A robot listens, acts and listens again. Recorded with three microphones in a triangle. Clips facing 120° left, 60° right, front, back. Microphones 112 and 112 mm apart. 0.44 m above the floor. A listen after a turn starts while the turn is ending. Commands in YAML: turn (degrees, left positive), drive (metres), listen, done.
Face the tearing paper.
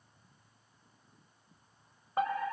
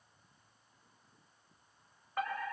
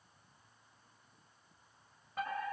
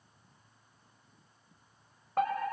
listen: true
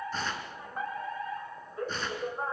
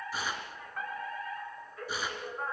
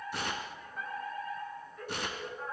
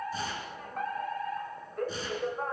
turn: 20
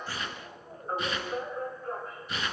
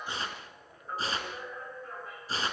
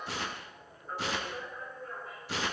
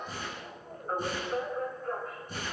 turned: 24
done: "Facing the tearing paper, 2 to 4 m away."